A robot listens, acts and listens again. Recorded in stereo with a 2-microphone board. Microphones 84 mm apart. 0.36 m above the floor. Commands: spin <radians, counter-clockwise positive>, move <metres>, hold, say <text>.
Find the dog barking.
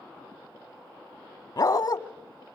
spin 0.87
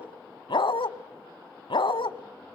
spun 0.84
spin 1.48
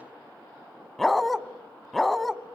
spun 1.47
say Facing the dog barking.